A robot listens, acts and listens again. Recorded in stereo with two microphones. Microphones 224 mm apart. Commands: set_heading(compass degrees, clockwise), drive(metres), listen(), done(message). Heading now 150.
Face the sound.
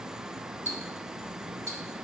set_heading(180)
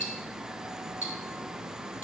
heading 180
set_heading(300)
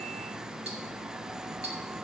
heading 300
set_heading(325)
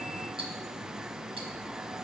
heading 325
set_heading(350)
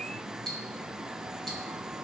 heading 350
done("Facing the ticking.")